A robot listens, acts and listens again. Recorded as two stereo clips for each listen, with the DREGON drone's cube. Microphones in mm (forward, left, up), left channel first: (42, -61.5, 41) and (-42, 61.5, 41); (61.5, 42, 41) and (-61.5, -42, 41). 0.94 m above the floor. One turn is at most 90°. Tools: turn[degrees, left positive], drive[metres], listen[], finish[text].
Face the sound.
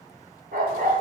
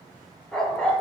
Thought: The dog barking: 120° left.
Action: turn[90]
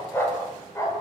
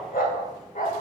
Thought: The dog barking is now 10° left.
Action: turn[10]
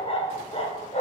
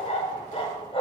Thought: The dog barking is now 15° right.
Action: turn[-15]
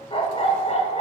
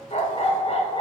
Thought: The dog barking is now 15° right.
Action: turn[-15]
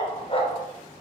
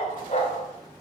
Thought: The dog barking is now 10° right.
Action: turn[-10]
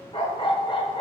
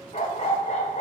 Action: finish[Facing the dog barking, 1 to 2 m away.]